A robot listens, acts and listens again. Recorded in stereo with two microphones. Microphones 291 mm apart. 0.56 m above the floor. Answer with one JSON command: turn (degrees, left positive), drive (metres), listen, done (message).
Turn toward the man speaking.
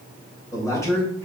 {"turn": 30}
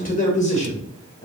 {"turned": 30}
{"turn": 30}
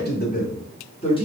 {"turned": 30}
{"turn": 15}
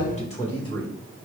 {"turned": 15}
{"turn": 15}
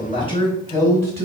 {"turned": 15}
{"turn": 30}
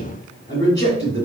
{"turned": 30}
{"turn": 145}
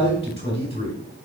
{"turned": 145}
{"turn": 20}
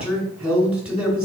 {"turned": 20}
{"done": "Found it: a man speaking, straight ahead."}